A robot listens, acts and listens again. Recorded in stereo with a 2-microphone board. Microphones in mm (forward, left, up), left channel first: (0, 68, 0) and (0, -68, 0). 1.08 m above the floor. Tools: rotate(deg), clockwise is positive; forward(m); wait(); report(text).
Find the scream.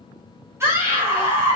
rotate(20)
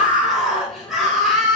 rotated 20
report("Found it: a scream, straight ahead, over 4 m away.")